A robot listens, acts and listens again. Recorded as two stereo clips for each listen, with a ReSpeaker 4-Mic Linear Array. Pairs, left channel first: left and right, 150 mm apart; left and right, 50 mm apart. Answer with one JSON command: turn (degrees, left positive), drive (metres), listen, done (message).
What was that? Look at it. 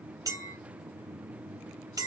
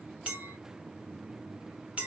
{"turn": -25}
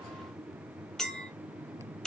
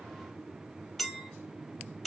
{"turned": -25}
{"done": "Found it: a clink, straight ahead, under 1 m away."}